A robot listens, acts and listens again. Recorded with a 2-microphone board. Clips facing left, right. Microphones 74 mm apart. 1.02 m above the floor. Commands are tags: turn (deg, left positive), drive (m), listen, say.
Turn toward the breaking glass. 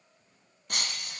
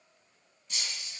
<turn deg="60"/>
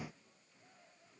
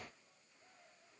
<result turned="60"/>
<listen/>
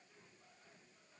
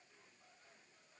<say>I heard breaking glass, but can't make it out now. It was about straight ahead or 60° left.</say>